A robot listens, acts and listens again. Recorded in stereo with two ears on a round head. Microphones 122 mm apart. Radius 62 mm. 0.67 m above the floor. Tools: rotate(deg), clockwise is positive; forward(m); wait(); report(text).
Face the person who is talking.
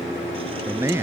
rotate(20)
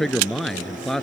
report("Found it: a man speaking, straight ahead.")